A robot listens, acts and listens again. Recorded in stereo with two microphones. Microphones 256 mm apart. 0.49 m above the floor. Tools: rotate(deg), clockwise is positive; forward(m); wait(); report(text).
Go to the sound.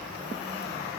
wait()
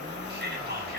rotate(40)
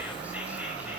wait()
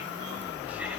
wait()
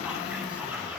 report("I heard whispering, but can't make it out now. It was about straight ahead or 100° right. I did not reach it.")